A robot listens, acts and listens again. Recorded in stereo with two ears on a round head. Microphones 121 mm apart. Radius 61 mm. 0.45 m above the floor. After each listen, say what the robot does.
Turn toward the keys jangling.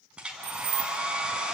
Turn 55° right.
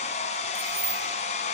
Turn 20° right.
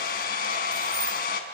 Keep listening.
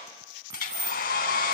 Turn 25° right.
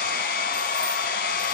Keep listening.
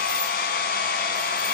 Keep listening.
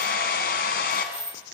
Found it: keys jangling, straight ahead.